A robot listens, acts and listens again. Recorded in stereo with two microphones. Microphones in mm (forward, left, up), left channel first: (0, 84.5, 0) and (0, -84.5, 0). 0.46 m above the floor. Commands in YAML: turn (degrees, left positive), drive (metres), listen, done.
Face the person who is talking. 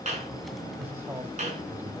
turn: -30
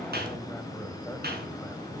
listen: true
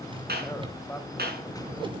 turn: 15
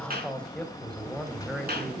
done: "Facing the man speaking, 2 to 4 m away."